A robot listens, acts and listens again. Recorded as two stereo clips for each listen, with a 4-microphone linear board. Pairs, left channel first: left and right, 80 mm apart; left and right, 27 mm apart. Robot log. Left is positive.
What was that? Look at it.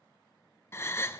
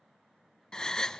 note: The gasp: about 30° left or 150° left.
cmd yaw +30
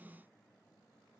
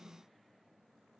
cmd idle
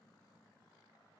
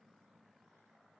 end: I heard a gasp, but can't make it out now. It was about straight ahead or 120° left.